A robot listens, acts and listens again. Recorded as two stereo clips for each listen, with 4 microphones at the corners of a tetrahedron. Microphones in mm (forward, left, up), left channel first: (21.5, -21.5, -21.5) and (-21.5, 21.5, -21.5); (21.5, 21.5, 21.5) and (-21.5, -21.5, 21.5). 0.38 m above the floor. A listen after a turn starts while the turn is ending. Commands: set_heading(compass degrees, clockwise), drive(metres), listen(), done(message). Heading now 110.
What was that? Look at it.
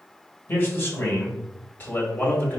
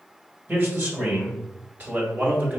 set_heading(195)
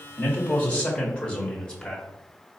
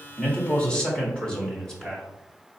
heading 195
set_heading(205)
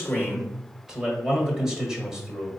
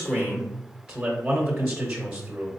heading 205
set_heading(5)
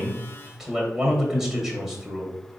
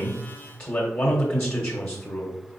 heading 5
set_heading(315)
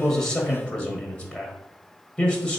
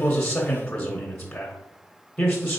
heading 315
done("Found it: a man speaking, straight ahead, 1 to 2 m away.")